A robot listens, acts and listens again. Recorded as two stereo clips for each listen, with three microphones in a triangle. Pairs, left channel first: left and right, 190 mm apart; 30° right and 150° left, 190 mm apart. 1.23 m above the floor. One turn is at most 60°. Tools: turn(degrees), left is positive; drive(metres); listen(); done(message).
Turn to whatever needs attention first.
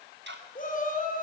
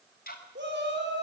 turn(degrees=60)
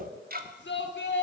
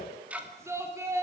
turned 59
turn(degrees=60)
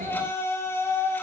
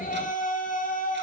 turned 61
turn(degrees=15)
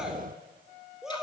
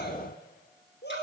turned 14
done("Found it: a shout, straight ahead.")